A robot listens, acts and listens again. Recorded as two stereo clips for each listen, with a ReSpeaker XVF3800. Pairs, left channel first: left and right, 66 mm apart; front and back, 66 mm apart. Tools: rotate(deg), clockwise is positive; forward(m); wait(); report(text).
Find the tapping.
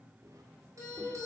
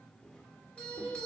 wait()
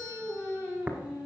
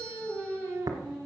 rotate(155)
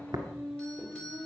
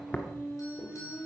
rotate(65)
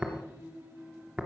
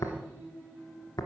rotate(20)
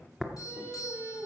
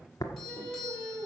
report("Found it: tapping, straight ahead, 1 to 2 m away.")